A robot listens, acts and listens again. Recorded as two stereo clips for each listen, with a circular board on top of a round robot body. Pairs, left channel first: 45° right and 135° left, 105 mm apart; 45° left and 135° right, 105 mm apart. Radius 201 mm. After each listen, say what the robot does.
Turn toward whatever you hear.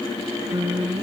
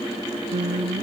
Turn 170° right.
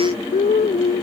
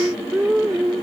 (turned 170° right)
Turn 50° right.
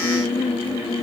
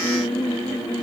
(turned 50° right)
Found it: singing, straight ahead.